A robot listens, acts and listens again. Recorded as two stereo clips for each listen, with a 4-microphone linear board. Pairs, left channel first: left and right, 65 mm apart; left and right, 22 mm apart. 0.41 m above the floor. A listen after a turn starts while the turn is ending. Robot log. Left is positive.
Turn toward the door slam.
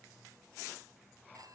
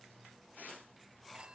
cmd idle
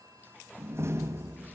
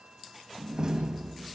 note: The door slam: about 40° right or 140° right.
cmd yaw -40
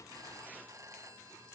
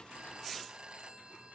cmd idle
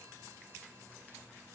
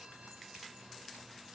end: I heard a door slam, but can't make it out now. It was about straight ahead or 100° right.